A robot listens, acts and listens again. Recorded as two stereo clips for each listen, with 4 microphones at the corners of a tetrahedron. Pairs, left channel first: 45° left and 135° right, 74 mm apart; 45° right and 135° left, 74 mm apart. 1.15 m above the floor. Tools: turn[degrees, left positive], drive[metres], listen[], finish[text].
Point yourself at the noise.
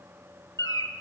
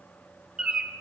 Thought: The bird: 60° left.
Action: turn[60]
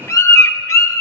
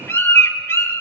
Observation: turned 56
Action: finish[Found it: a bird, straight ahead.]